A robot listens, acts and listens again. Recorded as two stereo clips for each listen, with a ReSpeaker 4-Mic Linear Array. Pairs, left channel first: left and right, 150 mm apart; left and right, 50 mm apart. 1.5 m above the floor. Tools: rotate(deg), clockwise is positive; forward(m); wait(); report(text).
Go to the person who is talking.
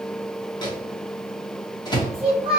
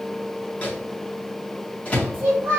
rotate(35)
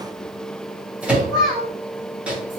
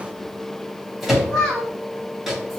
forward(1.0)
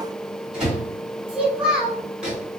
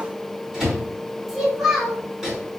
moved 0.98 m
forward(1.0)
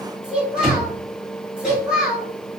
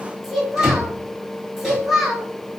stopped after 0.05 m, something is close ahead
report("I am next to the child speaking.")